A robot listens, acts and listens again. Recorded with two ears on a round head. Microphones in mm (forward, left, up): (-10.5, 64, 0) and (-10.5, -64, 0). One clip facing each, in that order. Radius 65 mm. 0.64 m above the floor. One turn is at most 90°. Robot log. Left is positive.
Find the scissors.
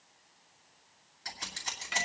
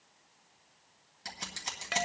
note: The scissors: about 25° right or 155° right.
cmd yaw -25
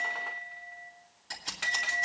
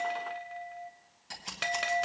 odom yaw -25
end: Found it: scissors, straight ahead.